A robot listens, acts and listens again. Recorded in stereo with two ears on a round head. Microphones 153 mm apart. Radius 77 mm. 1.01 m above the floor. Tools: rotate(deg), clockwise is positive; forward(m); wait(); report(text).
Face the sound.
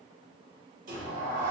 rotate(45)
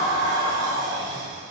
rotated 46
rotate(70)
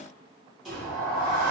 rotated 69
report("Facing the sliding door.")